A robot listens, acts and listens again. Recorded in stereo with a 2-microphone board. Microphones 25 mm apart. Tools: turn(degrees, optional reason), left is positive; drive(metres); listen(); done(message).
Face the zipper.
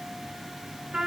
listen()
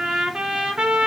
listen()
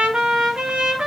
done("I can't make out a zipper to turn to.")